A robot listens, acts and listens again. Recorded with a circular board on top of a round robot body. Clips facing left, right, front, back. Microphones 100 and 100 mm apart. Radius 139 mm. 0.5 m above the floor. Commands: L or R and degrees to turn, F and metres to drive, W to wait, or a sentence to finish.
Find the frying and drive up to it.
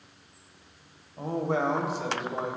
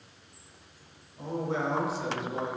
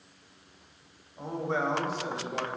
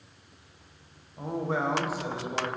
W
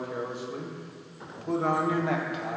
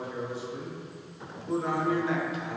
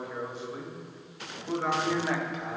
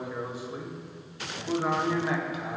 W
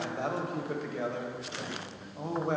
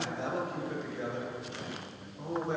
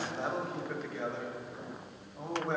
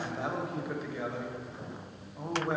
I can't make out frying to turn to.